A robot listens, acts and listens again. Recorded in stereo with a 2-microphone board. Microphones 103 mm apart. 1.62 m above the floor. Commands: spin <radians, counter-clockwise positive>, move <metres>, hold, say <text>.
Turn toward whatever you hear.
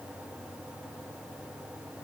hold
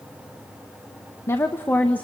spin 0.52
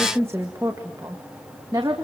spin -0.70
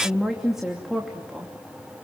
say Found it: a woman speaking, straight ahead.